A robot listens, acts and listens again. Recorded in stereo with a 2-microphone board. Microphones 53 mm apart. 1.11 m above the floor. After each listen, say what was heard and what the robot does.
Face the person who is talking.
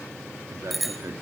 The man speaking: about 75° right or 105° right. Turn 75° right.
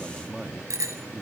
So it is at 15° right. Turn 15° right.
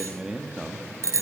The man speaking is now 15° right. Turn 15° right.
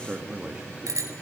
The man speaking is now 20° right. Turn 20° right.
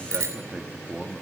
The man speaking is now 20° right. Turn 20° right.
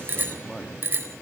Facing the man speaking.